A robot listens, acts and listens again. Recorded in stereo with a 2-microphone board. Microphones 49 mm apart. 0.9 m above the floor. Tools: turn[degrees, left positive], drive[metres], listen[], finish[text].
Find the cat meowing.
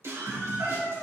Thought: The cat meowing: about 50° right or 130° right.
Action: turn[-50]
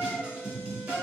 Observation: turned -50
Thought: So it is at 65° right.
Action: turn[-65]
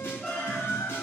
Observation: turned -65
Thought: The cat meowing is now 15° left.
Action: turn[15]
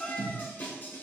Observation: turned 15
Thought: The cat meowing is now 10° left.
Action: turn[10]
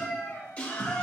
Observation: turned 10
Thought: The cat meowing is now 15° left.
Action: turn[15]
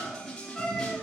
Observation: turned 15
Thought: The cat meowing is now 10° left.
Action: turn[10]
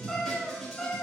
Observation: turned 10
Action: finish[Found it: a cat meowing, straight ahead, 2 to 4 m away.]